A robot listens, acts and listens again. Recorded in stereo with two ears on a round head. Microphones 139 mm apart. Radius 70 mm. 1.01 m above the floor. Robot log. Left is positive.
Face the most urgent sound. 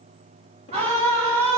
note: The scream: about 50° right or 130° right.
cmd yaw -50
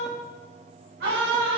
note: So it is at 80° right.
cmd yaw -80
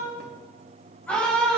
note: The scream is now 10° left.
cmd yaw +10
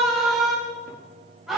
end: Found it: a scream, straight ahead.